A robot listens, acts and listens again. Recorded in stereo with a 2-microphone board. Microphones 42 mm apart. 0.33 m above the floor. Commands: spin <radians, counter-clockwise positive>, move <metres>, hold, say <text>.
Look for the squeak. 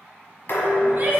hold
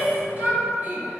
hold
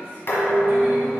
say I can't make out a squeak, only a shout and dishes clattering.